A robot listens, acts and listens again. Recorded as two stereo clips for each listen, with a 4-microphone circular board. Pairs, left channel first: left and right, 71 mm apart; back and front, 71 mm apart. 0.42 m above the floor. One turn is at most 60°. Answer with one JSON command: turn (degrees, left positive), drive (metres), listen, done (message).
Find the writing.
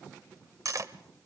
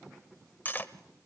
{"listen": true}
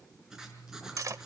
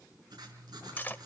{"done": "Found it: writing, straight ahead."}